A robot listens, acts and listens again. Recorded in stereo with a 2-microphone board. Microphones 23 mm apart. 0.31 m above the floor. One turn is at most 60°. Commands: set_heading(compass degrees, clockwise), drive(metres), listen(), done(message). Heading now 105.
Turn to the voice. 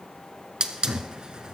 listen()
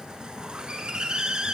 listen()
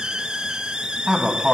set_heading(135)
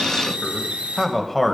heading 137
done("Facing the man speaking, 1 to 2 m away.")